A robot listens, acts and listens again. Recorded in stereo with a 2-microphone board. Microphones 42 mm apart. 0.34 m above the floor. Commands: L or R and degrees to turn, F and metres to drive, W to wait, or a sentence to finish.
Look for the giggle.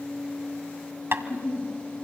L90
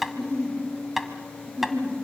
R10
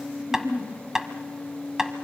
Found it: a giggle, straight ahead.